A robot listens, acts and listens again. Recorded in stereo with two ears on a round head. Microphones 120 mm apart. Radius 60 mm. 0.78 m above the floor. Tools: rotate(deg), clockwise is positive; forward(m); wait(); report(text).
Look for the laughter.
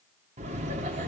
rotate(50)
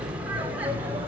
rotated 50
rotate(10)
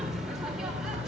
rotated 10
report("Found it: laughter, straight ahead.")